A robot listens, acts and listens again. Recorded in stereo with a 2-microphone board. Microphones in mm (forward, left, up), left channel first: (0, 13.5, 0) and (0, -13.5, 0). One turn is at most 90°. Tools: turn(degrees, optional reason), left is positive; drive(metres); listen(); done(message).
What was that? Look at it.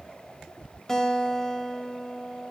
turn(degrees=20, reason="The guitar: about 20° left or 160° left.")
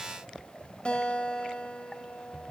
turn(degrees=90, reason="So it is at 140° left.")
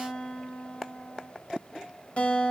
turn(degrees=50, reason="The guitar is now 50° left.")
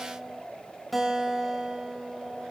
done("Found it: a guitar, straight ahead, 2 to 4 m away.")